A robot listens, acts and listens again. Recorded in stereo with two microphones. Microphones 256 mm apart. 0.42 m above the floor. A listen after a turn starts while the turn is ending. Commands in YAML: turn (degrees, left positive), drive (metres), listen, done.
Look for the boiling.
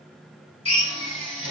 listen: true
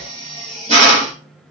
listen: true
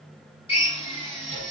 done: "I can't make out boiling, only a drill."